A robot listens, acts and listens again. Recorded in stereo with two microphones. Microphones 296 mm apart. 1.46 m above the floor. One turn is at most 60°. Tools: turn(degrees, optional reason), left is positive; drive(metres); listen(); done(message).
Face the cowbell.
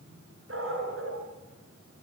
listen()
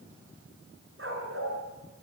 listen()
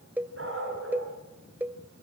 turn(degrees=-30)
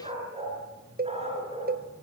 turn(degrees=-60, reason="So it is at 145° right.")
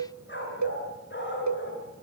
turn(degrees=-60, reason="The cowbell is now 90° right.")
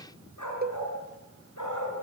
turn(degrees=-35, reason="The cowbell is now 35° right.")
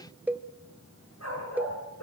done("Found it: a cowbell, straight ahead.")